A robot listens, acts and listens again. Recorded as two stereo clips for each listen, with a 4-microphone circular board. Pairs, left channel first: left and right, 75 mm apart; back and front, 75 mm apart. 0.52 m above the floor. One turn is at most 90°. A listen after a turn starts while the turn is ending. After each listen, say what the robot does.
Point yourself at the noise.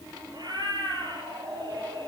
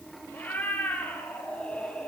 Turn 90° right.
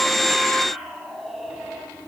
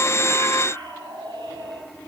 Found it: a cat meowing, straight ahead.